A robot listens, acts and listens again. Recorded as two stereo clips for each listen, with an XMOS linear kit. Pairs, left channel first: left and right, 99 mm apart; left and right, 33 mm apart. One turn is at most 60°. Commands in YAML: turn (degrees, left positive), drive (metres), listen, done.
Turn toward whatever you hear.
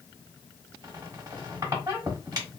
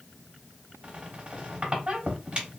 turn: -35
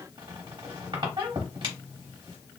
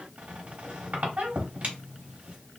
turn: -60
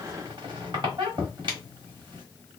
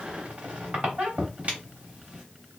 turn: -60
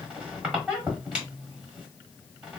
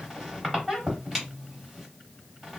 turn: -10
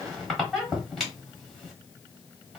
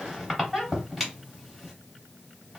done: "Found it: a squeak, straight ahead."